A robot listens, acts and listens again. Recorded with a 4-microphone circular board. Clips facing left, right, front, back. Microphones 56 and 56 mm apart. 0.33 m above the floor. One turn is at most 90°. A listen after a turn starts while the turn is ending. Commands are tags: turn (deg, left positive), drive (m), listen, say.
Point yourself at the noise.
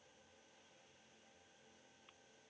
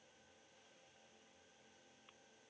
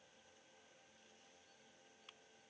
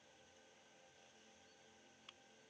<listen/>
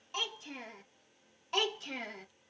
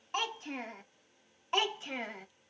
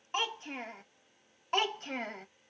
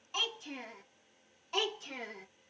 <turn deg="-20"/>
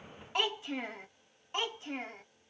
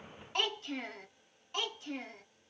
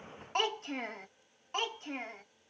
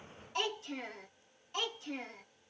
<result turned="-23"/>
<turn deg="40"/>
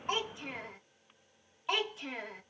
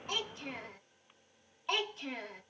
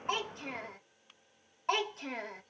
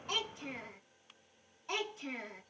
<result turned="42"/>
<say>Found it: a child speaking, straight ahead.</say>